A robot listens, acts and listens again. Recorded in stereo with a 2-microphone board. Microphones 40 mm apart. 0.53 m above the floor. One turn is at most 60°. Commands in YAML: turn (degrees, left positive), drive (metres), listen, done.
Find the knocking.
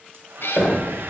turn: 60
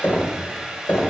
turn: 45
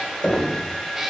turn: 25
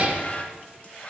listen: true
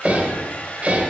done: "Found it: knocking, straight ahead, 1 to 2 m away."